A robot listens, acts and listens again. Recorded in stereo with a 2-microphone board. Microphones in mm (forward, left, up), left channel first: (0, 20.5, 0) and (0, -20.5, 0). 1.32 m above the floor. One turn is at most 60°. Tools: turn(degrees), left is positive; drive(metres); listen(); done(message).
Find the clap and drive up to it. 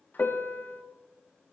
listen()
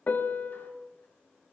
listen()
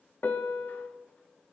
done("I can't make out a clap, only a piano.")